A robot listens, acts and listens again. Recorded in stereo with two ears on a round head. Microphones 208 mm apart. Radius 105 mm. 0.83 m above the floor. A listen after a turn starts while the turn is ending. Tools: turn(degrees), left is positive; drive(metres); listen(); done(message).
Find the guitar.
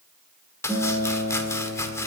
turn(degrees=15)
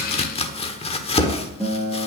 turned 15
done("Found it: a guitar, straight ahead, 2 to 4 m away.")